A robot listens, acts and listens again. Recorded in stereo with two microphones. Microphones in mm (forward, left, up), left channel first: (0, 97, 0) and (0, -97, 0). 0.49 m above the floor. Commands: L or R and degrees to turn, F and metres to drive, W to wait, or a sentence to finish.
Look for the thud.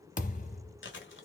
L40
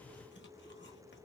W
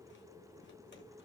I heard a thud, but can't make it out now. It was about straight ahead or 100° left.